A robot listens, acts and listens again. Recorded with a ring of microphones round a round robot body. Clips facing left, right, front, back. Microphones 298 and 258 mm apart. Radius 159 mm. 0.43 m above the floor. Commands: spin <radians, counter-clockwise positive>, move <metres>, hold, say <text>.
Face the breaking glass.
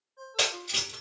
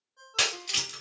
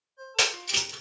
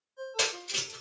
spin -0.44
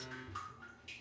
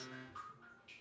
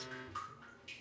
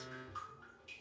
say I heard breaking glass from this way, but can't make it out now.